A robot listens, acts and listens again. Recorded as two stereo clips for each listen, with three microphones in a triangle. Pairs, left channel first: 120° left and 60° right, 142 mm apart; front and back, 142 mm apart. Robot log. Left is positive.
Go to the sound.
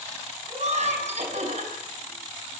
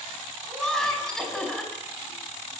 note: The laughter: 85° right.
cmd yaw -85
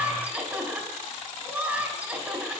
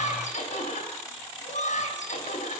note: The laughter is now 20° left.
cmd yaw +20
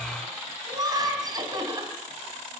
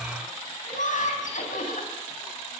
cmd fwd 1.0
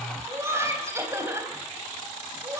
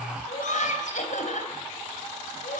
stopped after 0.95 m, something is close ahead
note: The laughter is now 10° left.
cmd yaw +10
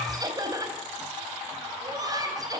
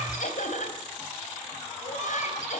end: Something is in my way. I am facing the laughter but have not reached it.